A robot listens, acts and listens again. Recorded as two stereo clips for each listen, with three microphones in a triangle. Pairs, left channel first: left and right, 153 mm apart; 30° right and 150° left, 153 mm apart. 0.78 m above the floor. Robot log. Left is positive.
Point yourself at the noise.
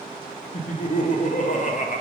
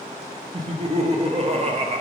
note: The laughter: 110° left.
cmd yaw +110
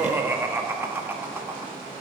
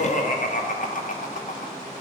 note: The laughter is now 15° right.
cmd yaw -15
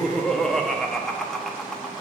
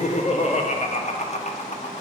end: Found it: laughter, straight ahead, under 1 m away.